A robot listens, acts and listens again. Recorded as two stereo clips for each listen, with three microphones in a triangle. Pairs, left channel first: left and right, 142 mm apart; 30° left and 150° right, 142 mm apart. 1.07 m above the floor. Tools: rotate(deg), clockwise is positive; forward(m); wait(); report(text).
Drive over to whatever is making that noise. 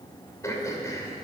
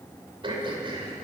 rotate(-160)
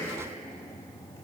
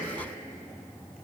rotate(-20)
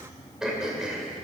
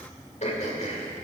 forward(1.0)
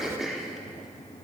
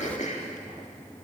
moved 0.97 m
forward(1.0)
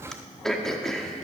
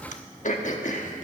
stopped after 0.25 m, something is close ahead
report("Arrived at the throat clearing, straight ahead.")